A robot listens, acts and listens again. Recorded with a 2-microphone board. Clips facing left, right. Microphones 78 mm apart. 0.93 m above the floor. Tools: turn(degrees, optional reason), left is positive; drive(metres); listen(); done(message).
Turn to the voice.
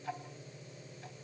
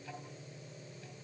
listen()
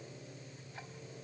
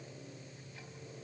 listen()
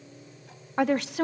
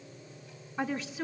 turn(degrees=70, reason="The woman speaking: about 70° left or 110° left.")
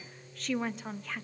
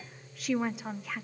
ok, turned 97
done("Found it: a woman speaking, straight ahead, under 1 m away.")